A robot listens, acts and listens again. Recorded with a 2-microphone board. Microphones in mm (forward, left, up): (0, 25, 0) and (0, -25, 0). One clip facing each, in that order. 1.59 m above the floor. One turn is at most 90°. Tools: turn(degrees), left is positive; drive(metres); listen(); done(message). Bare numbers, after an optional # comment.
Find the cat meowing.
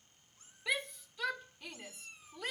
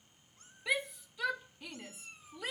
# The cat meowing: about 40° right or 140° right.
turn(-40)
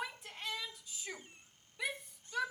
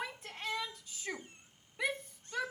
# So it is at 125° right.
turn(-90)
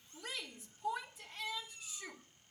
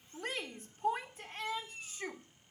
# The cat meowing is now 40° right.
turn(-40)
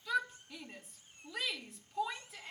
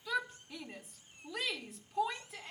listen()
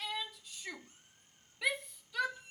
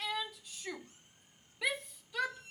done("Facing the cat meowing, over 4 m away.")